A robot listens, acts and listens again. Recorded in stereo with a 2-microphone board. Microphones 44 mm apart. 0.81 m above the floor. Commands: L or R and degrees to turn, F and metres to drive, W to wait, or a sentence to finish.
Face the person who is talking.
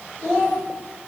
L30
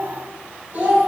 R40
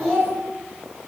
Facing the child speaking, 1 to 2 m away.